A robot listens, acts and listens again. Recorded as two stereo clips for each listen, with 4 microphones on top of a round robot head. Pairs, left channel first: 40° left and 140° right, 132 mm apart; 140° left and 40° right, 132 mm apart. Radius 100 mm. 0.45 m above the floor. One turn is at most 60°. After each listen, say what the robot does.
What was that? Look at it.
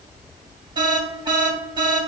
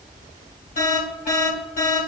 Turn 60° left.
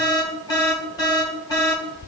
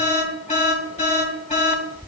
Turn 60° left.
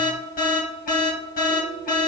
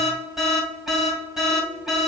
Turn 50° left.
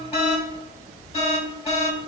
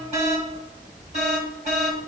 Found it: an alarm, straight ahead, 2 to 4 m away.